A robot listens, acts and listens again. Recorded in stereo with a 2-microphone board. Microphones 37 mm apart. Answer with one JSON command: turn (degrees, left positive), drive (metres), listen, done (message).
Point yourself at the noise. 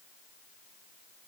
{"listen": true}
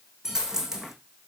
{"turn": -30}
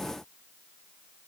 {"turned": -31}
{"listen": true}
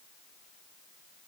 {"done": "I heard a dropped coin, but can't make it out now. It was about 20° left or 135° right."}